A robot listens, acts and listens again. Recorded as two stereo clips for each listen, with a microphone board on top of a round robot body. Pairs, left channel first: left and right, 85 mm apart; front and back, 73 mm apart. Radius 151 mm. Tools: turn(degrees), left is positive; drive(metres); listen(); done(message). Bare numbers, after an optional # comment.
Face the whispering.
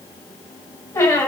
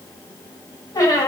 listen()
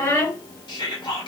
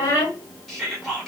# The whispering: 85° left.
turn(85)
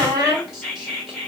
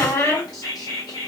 done("Facing the whispering.")